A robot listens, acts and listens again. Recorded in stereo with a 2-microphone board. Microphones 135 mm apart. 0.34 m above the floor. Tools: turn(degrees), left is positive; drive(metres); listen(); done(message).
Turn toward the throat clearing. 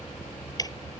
listen()
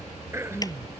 turn(degrees=-20)
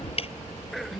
done("Facing the throat clearing.")